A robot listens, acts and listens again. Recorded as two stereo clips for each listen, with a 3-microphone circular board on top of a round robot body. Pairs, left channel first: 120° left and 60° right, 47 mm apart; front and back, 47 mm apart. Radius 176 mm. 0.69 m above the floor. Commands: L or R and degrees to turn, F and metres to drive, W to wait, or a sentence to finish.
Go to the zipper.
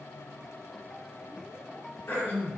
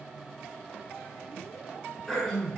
W
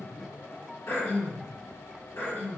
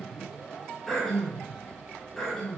W
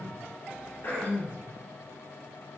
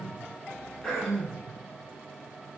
I can't make out a zipper, only throat clearing.